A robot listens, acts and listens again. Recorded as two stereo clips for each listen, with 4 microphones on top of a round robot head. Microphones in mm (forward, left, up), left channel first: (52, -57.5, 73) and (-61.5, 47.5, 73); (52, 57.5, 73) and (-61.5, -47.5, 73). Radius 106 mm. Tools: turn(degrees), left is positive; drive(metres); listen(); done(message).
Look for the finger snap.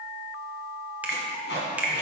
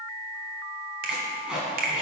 turn(degrees=-145)
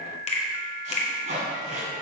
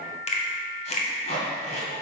done("Facing the finger snap, 1 to 2 m away.")